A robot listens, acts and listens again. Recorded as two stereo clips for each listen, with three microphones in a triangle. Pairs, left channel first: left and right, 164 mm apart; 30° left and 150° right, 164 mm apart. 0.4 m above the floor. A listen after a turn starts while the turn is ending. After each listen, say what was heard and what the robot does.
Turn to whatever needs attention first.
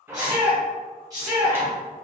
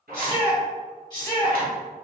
The shout: 25° right. Turn 25° right.
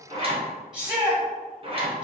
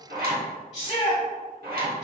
Facing the shout, 1 to 2 m away.